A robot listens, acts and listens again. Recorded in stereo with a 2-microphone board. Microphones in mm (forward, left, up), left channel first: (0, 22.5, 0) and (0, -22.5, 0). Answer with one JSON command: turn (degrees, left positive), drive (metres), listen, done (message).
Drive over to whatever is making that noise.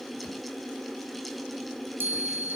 {"turn": -55}
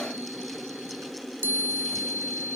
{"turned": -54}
{"turn": -70}
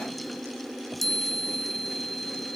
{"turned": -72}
{"drive": 1.0}
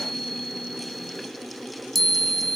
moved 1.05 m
{"drive": 1.0}
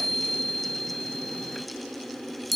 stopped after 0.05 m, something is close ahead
{"done": "Arrived at the chime, straight ahead."}